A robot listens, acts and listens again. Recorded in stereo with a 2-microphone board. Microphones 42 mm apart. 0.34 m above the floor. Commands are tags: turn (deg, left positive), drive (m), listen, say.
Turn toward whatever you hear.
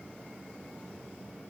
<listen/>
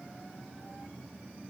<listen/>
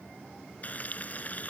<turn deg="40"/>
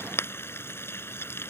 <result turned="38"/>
<turn deg="100"/>
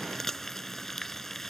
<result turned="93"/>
<say>Found it: frying, straight ahead.</say>